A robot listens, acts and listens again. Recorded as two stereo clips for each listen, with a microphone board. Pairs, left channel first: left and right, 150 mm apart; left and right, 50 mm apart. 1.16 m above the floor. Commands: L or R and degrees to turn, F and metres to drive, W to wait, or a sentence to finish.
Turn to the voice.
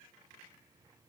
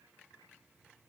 W
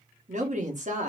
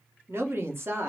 R55
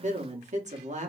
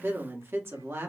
R65
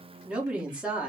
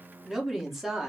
R10
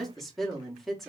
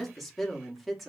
Found it: a woman speaking, straight ahead, 1 to 2 m away.